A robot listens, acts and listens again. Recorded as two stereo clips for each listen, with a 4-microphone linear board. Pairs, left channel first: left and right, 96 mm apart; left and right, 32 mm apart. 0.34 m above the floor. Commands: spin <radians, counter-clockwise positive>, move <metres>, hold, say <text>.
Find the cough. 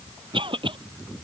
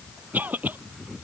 spin -1.13
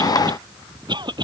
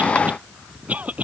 spin -0.87
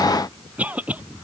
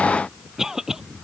spin -0.26
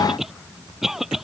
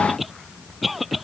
say Facing the cough.